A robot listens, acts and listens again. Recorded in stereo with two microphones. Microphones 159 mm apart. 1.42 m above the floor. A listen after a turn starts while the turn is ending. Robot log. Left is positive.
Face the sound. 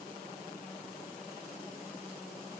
cmd idle
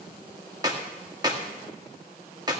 note: The clap: about 25° right or 155° right.
cmd yaw -25
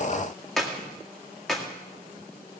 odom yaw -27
end: Facing the clap.